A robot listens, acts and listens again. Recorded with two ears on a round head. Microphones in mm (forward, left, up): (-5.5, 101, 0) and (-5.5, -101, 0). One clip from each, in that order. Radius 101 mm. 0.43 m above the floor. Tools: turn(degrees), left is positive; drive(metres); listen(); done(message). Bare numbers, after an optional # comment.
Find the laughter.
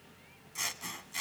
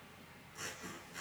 listen()
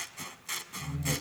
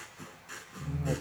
# The laughter: about 55° right or 125° right.
turn(-55)
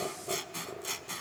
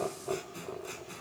# So it is at 25° right.
turn(-25)
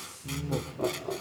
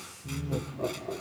# The laughter is now 35° left.
turn(35)
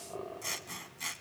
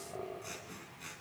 # The laughter is now 30° left.
turn(30)
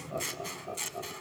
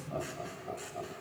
# The laughter is now 10° left.
turn(10)
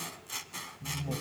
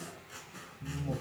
done("Facing the laughter.")